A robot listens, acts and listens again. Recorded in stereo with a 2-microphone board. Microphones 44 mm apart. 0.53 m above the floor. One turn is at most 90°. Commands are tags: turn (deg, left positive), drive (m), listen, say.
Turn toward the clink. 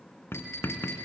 <turn deg="90"/>
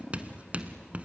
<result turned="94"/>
<listen/>
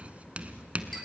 <listen/>
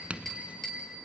<say>Facing the clink, over 4 m away.</say>